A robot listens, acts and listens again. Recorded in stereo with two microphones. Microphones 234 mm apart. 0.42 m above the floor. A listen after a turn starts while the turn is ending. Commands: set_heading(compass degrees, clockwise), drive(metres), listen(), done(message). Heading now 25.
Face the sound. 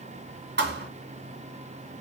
set_heading(75)
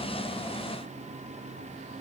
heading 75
listen()
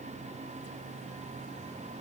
done("I heard a thud, but can't make it out now. It was about straight ahead or 80° right.")